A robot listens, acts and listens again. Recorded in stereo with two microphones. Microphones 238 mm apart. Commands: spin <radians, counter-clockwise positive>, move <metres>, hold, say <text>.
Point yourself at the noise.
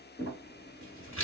spin 0.96
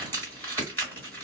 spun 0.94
spin 0.17
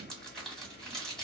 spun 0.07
say Found it: crumpling, straight ahead, 1 to 2 m away.